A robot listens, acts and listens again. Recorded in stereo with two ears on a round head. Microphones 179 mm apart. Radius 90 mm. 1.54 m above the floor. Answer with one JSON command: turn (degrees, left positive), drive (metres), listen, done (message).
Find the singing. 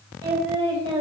{"turn": -30}
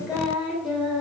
{"done": "Facing the singing, 2 to 4 m away."}